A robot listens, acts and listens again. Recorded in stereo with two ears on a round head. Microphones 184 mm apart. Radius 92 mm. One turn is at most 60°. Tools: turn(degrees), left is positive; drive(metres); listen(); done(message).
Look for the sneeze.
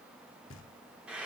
listen()
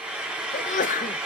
turn(degrees=40)
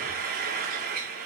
listen()
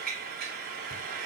done("I heard a sneeze, but can't make it out now. It was about straight ahead or 100° left.")